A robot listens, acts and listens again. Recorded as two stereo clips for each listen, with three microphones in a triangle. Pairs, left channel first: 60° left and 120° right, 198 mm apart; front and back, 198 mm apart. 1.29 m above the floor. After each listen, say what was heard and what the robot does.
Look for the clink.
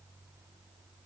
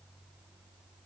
Keep listening.
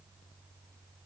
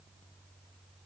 Keep listening.
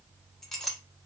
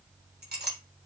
The clink: 150° left. Turn 150° left.
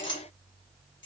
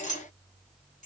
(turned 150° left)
The clink is now 50° left. Turn 50° left.
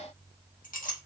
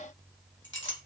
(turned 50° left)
The clink is now 15° left. Turn 15° left.
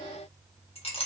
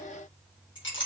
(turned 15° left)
Found it: a clink, straight ahead, 1 to 2 m away.